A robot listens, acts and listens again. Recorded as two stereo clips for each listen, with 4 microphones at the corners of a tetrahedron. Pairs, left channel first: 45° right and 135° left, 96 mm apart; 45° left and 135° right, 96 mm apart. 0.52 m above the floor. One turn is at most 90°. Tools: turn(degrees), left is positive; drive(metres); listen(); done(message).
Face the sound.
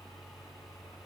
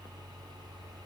listen()
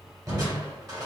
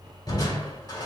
turn(degrees=85)
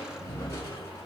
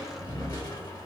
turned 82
done("Found it: crushing, straight ahead.")